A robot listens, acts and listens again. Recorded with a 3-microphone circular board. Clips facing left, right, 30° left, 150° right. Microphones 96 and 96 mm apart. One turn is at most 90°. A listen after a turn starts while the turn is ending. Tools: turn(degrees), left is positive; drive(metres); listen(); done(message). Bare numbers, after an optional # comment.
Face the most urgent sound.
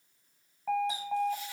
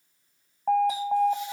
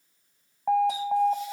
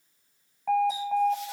# The alarm: 40° right.
turn(-40)
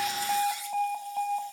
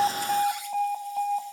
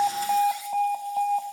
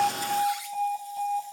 done("Facing the alarm.")